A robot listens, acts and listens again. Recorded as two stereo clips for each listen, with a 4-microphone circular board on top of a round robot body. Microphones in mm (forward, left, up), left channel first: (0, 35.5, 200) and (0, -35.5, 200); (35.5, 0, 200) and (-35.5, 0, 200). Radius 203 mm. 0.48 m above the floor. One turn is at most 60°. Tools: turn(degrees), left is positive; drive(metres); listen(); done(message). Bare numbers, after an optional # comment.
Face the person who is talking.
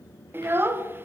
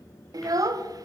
# The child speaking: 150° right.
turn(-60)
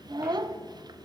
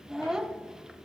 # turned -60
# The child speaking is now 100° right.
turn(-60)
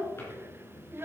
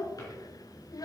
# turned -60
# The child speaking is now 35° right.
turn(-35)
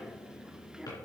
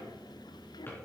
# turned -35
listen()
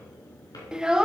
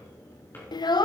# The child speaking is now 10° right.
turn(-10)
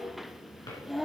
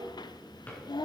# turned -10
done("Facing the child speaking, under 1 m away.")